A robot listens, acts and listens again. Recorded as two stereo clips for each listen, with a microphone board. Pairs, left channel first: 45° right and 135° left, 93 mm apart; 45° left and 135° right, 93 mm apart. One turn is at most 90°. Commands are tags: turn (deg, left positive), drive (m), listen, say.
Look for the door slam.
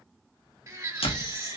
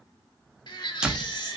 <turn deg="-55"/>
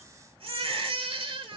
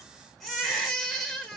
<say>Facing where the door slam came from. I can't hear it now.</say>